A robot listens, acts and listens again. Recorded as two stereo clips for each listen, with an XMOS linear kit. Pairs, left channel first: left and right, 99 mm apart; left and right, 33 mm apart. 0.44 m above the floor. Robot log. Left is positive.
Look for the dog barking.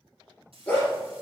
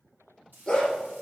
note: The dog barking: about 20° left or 160° left.
cmd yaw +20
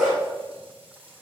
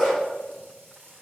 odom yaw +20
end: Found it: a dog barking, straight ahead.